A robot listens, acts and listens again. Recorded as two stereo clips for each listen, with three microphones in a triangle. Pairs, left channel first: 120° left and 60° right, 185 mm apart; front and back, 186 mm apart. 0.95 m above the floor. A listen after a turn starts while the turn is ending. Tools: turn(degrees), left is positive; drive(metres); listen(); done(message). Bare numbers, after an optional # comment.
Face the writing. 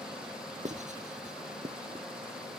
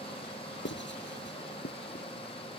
# The writing: 10° right.
turn(-10)
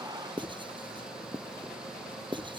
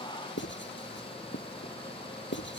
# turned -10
done("Facing the writing.")